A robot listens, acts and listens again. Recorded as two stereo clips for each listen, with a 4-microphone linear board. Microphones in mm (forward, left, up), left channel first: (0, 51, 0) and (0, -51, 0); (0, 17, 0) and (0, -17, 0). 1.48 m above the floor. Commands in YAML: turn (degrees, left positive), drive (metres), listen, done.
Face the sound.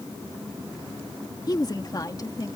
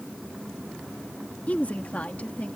turn: 40
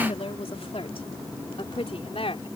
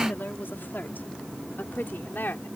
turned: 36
turn: 110
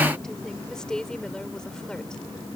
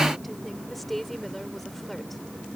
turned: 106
turn: 10
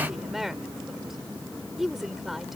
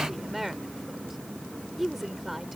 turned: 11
done: "Found it: a woman speaking, straight ahead."